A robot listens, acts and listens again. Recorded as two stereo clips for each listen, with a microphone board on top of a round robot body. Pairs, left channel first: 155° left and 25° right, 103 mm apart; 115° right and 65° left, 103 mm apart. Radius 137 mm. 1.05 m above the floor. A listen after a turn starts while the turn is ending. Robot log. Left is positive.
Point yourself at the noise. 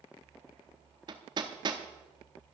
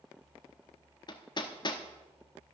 note: The hammering: 65° right.
cmd yaw -65
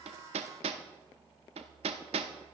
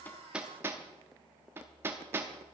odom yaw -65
end: Facing the hammering, under 1 m away.